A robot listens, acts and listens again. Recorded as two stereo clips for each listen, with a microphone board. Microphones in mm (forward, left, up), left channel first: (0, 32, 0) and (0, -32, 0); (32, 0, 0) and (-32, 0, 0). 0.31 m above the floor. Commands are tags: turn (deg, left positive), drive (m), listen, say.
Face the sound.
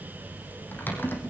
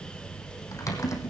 <turn deg="30"/>
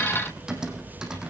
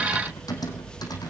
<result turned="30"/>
<turn deg="-10"/>
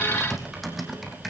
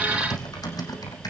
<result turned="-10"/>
<say>Facing the typing on a keyboard.</say>